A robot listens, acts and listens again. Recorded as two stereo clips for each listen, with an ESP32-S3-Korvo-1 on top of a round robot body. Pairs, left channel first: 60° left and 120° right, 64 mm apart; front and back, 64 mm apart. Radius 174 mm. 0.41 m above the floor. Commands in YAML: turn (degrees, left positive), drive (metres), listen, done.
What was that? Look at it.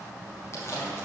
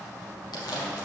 turn: 10
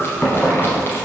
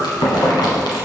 done: "Found it: chewing, straight ahead, under 1 m away."